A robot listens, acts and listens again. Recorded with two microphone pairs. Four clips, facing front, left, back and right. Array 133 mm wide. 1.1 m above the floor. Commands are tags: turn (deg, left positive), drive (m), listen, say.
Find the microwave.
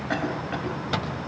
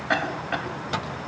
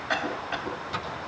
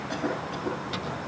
<turn deg="40"/>
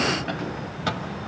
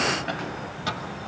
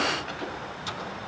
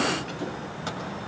<say>Found it: a microwave, straight ahead.</say>